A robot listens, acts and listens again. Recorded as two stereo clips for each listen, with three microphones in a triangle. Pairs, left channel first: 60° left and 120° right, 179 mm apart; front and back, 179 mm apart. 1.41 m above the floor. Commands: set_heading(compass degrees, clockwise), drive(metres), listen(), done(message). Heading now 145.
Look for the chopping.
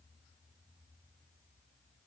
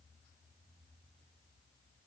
listen()
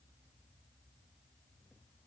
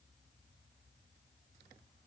listen()
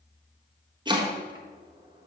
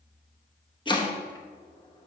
set_heading(205)
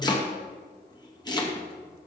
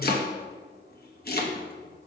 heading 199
done("Facing the chopping, 1 to 2 m away.")